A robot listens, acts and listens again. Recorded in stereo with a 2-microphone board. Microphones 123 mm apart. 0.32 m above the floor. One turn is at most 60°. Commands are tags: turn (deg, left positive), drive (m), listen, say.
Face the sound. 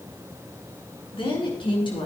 <turn deg="45"/>
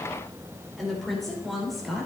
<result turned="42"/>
<say>Facing the woman speaking, over 4 m away.</say>